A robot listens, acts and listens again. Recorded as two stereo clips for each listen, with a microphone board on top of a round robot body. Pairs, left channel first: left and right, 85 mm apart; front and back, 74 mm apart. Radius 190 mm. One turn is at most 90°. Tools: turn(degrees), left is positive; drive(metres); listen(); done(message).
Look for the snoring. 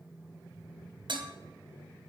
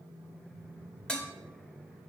listen()
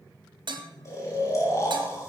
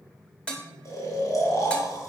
turn(degrees=40)
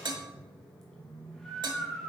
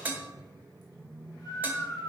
done("Found it: snoring, straight ahead, 2 to 4 m away.")